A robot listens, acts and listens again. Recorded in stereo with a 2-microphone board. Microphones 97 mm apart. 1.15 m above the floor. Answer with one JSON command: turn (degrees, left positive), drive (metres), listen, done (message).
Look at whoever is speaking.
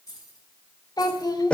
{"turn": 45}
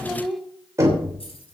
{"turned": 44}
{"done": "Found it: a child speaking, straight ahead."}